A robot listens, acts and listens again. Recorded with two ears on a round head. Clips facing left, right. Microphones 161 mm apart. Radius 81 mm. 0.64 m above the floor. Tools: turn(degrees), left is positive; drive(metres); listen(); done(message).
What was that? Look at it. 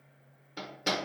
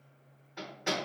turn(degrees=45)
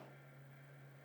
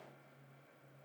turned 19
listen()
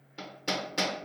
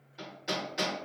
turn(degrees=115)
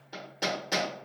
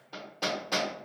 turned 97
turn(degrees=15)
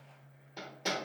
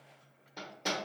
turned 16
done("Found it: hammering, straight ahead.")